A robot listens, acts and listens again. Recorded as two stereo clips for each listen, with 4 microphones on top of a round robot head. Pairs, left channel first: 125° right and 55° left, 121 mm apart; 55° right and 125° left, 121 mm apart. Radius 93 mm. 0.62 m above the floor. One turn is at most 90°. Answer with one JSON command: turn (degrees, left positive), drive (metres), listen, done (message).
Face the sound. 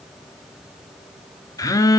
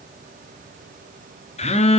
{"turn": -70}
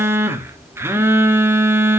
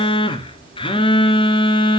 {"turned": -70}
{"turn": -15}
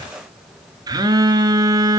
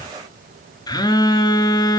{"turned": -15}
{"done": "Found it: a phone buzzing, straight ahead, 1 to 2 m away."}